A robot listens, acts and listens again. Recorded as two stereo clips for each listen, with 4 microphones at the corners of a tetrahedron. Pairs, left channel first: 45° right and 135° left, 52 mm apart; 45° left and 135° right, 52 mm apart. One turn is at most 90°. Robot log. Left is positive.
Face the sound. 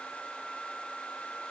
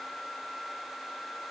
cmd idle
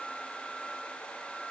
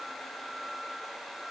cmd idle
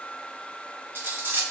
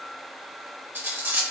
note: The cutlery clinking: straight behind.
cmd yaw +90
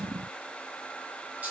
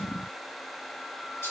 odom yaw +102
note: Nothing new. It was at 75° left.
cmd yaw +75
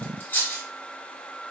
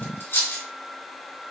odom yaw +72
end: Facing the cutlery clinking.